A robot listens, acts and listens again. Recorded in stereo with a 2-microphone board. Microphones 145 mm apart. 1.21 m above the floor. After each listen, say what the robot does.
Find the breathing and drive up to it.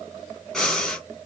Turn 30° left.
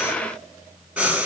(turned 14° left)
Turn 10° right.
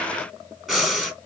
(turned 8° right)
Drive 1.0 m forward.
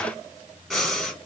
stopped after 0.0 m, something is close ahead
Something is in my way. I am facing the breathing but have not reached it.